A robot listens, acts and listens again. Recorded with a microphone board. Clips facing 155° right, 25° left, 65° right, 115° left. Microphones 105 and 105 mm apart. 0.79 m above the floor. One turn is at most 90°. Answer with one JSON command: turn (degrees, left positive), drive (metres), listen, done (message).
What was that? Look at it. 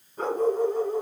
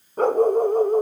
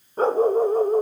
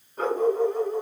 {"turn": -20}
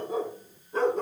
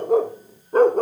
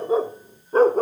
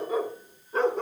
{"turn": -20}
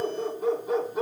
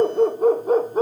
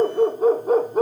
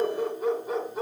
{"turn": -30}
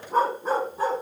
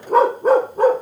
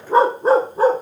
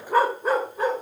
{"turn": -15}
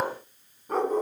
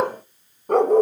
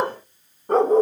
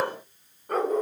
{"turn": -10}
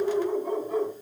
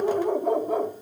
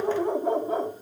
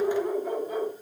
{"done": "Found it: a dog barking, straight ahead."}